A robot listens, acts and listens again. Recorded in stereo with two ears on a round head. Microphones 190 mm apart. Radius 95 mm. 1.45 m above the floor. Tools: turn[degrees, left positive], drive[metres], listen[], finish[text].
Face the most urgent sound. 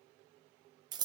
Action: listen[]
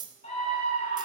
Thought: The scream: about 35° left or 145° left.
Action: turn[35]
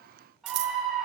Action: finish[Facing the scream.]